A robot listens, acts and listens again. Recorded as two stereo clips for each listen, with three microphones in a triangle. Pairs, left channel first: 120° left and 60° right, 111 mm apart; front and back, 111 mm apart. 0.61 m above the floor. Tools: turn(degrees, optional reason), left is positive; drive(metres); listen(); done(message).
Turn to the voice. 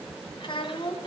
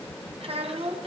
turn(degrees=160, reason="The child speaking: 160° left.")
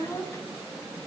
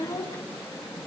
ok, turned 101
turn(degrees=60, reason="The child speaking is now 60° left.")
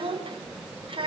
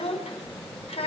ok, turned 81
turn(degrees=-25, reason="The child speaking is now 25° right.")
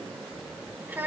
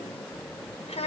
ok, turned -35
turn(degrees=10, reason="The child speaking is now 10° left.")
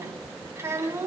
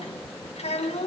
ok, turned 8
done("Facing the child speaking.")